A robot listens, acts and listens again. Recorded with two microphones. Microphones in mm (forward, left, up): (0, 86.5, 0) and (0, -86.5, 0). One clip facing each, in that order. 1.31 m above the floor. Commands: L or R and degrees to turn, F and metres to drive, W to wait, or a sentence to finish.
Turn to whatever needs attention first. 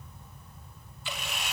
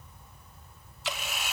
W
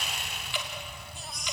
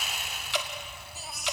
R30
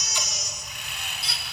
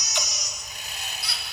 L30
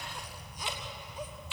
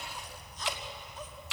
W
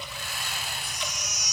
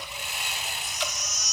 L10
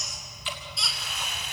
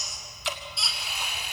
Found it: a baby crying, straight ahead.